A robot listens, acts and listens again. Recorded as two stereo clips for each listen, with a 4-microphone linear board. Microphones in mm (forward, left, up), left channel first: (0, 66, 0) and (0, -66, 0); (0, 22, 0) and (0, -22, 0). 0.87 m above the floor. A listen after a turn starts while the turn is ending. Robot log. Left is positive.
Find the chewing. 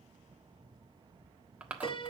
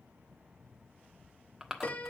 cmd yaw -30
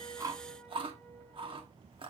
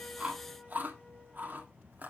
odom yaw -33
note: So it is at 135° right.
cmd yaw -135
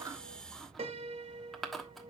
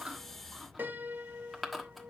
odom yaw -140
end: Facing the chewing.